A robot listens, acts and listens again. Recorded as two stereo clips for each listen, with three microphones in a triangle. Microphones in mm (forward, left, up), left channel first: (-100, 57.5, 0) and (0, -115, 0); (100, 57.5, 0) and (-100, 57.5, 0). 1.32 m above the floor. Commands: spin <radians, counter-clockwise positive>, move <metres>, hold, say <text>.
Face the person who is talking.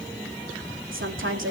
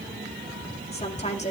spin -0.96
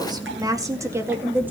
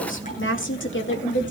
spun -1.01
spin 0.35
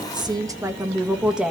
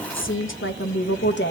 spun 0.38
spin 0.52
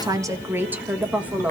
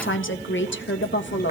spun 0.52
spin 0.35
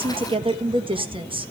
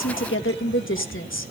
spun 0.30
say Found it: a woman speaking, straight ahead, 1 to 2 m away.